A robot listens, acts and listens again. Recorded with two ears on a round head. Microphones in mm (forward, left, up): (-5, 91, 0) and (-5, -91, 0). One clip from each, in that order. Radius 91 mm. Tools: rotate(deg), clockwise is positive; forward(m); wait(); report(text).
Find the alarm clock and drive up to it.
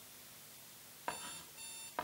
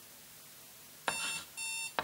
rotate(50)
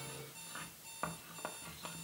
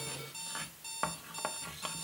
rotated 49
rotate(75)
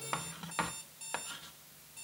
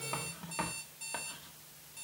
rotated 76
forward(1.0)
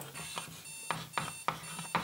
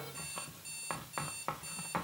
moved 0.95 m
forward(1.0)
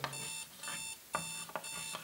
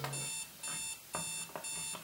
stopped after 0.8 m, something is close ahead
rotate(-10)
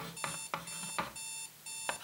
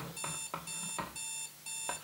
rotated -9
report("I am next to the alarm clock.")